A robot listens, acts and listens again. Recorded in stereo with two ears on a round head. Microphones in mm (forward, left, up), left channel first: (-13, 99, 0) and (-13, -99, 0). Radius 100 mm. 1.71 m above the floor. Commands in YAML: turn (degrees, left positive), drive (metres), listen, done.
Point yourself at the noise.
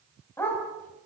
turn: 30
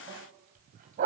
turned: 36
turn: -40
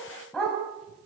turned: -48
done: "Found it: a dog barking, straight ahead."